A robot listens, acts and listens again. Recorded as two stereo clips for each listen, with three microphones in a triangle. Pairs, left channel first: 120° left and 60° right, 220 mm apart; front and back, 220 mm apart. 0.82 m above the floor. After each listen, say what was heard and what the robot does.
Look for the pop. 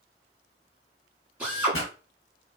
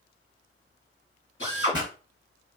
The pop: 110° left. Turn 110° left.
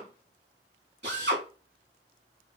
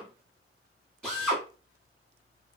I heard a pop from this way, but can't make it out now.